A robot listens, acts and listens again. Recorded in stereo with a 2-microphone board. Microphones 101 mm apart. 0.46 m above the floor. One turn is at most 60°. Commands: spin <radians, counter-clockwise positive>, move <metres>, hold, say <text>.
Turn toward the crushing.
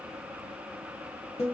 hold
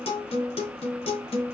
hold
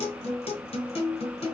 say I can't make out crushing to turn to.